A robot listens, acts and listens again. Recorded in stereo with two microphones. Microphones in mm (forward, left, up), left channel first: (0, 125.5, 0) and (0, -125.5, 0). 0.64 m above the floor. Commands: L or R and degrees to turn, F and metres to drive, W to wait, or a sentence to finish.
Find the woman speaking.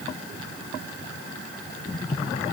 W
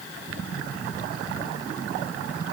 W
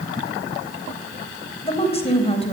L25
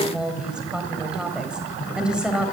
Facing the woman speaking.